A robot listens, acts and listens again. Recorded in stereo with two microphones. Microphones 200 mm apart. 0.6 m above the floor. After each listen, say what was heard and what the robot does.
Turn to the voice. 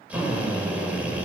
Keep listening.
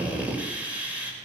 Keep listening.
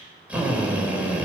I can't make out anyone speaking, only a drill.